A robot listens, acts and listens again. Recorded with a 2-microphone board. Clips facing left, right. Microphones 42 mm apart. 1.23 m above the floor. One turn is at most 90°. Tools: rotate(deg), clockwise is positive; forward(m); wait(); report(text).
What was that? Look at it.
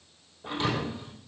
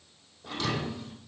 rotate(-30)
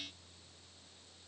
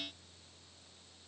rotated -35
wait()
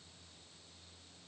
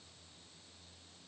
report("I heard a thud, but can't make it out now. It was about 5° right or 115° left.")